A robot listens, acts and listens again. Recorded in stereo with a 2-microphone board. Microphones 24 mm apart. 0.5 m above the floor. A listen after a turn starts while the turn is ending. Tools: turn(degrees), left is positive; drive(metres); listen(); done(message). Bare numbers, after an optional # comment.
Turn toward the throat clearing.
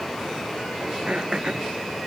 # The throat clearing: about 45° right or 135° right.
turn(-45)
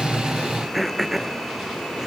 # So it is at 10° right.
turn(-10)
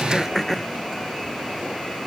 done("Found it: throat clearing, straight ahead.")